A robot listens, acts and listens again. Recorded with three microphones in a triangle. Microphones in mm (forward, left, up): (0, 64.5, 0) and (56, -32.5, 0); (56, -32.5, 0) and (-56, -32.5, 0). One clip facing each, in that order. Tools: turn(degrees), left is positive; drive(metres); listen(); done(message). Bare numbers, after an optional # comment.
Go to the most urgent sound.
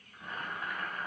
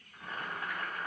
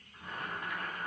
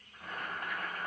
listen()
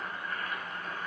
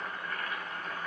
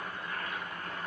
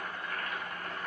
listen()
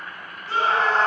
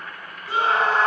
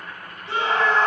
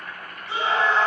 # The scream: 20° left.
turn(20)
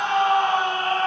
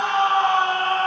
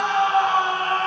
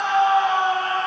drive(1.0)
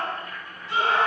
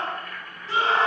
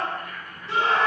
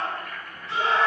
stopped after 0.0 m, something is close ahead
done("Blocked. The scream is further on, straight ahead.")